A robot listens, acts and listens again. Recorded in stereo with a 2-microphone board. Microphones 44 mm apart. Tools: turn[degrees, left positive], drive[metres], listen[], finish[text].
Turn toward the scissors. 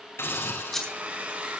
Action: turn[30]
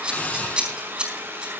Thought: So it is at 25° right.
Action: turn[-25]
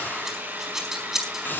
Thought: The scissors is now 10° right.
Action: turn[-10]
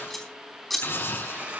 Action: finish[Facing the scissors, over 4 m away.]